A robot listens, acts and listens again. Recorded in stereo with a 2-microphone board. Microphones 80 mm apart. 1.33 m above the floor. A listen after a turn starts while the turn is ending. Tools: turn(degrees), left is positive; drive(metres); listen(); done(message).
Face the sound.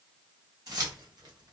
turn(degrees=-55)
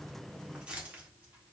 turn(degrees=-15)
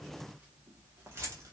turn(degrees=-35)
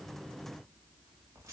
turn(degrees=-35)
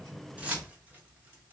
turn(degrees=-20)
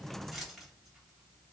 done("Found it: keys jangling, straight ahead, 1 to 2 m away.")